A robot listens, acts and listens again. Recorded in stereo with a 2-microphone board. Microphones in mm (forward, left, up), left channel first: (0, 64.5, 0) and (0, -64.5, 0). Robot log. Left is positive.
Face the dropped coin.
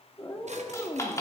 note: The dropped coin: about 25° left or 155° left.
cmd yaw +25
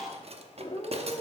cmd idle
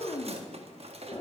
end: I heard a dropped coin, but can't make it out now. It was about straight ahead or 130° left.